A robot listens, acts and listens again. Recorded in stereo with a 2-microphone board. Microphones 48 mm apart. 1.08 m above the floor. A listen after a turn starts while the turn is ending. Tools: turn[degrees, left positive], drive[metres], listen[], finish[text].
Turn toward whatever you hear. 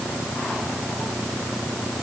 Action: listen[]
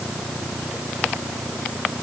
Action: listen[]
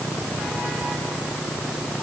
Action: finish[I can't make out anything.]